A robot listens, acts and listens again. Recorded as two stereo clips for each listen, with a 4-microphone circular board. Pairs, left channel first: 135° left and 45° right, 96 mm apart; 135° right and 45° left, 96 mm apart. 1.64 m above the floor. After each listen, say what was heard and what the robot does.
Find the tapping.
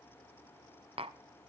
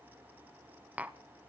The tapping: 30° right. Turn 30° right.
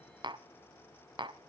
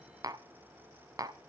The tapping is now 10° right. Turn 10° right.
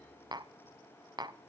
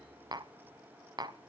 Found it: tapping, straight ahead, under 1 m away.